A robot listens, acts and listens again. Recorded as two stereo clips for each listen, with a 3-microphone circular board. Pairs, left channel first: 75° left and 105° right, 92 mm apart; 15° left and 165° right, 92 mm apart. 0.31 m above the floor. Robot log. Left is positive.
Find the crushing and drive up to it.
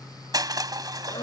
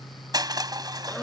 note: The crushing: 135° right.
cmd yaw -135
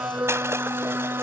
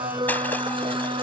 cmd idle
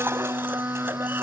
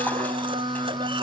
cmd idle
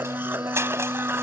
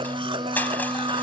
note: The crushing is now 50° right.
cmd yaw -50
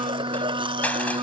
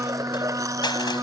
cmd idle
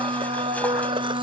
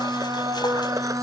cmd idle
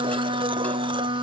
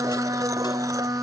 end: Facing where the crushing came from. I can't hear it now. I did not reach it.